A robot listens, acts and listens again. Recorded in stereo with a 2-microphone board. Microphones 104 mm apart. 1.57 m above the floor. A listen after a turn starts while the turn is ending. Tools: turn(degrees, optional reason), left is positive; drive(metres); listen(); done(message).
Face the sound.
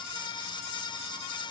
listen()
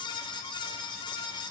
listen()
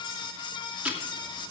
turn(degrees=-30)
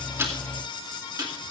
turn(degrees=-140, reason="So it is at 140° right.")
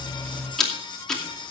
done("Found it: ticking, straight ahead.")